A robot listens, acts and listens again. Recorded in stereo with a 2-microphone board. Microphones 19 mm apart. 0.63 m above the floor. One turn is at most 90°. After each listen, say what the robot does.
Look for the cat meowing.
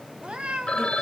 Turn 65° right.
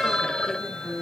Keep listening.
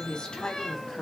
Keep listening.
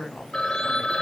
I heard a cat meowing, but can't make it out now. It was about straight ahead or 50° right.